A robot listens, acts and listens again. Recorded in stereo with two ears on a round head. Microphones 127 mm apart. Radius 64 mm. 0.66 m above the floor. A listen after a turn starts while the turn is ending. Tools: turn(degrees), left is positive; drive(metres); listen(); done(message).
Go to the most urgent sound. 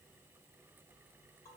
listen()
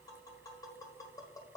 listen()
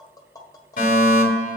turn(degrees=60)
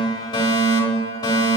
turn(degrees=35)
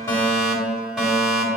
drive(metres=1.0)
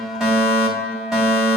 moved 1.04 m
drive(metres=1.0)
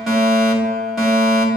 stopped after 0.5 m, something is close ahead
done("I am next to the fire alarm.")